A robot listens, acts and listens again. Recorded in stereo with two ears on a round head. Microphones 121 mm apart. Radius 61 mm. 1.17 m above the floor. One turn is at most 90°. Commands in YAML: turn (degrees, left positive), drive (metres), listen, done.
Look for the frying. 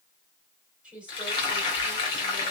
turn: 35
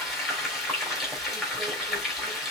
done: "Facing the frying."